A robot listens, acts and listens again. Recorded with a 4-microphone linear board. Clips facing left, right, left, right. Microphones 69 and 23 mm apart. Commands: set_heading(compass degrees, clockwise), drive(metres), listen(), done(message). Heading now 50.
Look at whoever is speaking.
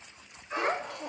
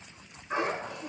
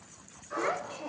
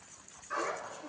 set_heading(320)
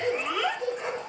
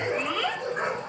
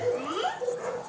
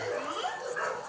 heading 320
set_heading(310)
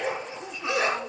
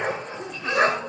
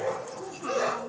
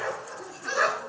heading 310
listen()
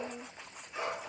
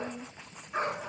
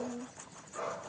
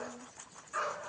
set_heading(290)
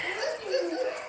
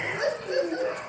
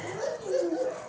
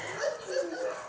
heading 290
set_heading(275)
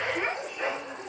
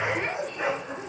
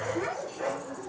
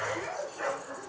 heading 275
set_heading(265)
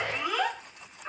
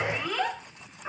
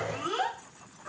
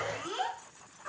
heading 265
done("Found it: a child speaking, straight ahead, 2 to 4 m away.")